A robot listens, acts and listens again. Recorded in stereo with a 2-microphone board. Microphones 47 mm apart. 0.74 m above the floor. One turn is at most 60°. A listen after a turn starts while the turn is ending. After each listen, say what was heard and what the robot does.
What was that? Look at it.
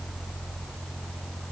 Keep listening.
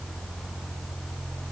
Keep listening.
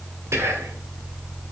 The whispering: about 70° right or 110° right. Turn 60° right.
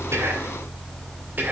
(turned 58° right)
So it is at 40° right. Turn 40° right.
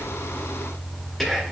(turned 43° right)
Found it: whispering, straight ahead, 2 to 4 m away.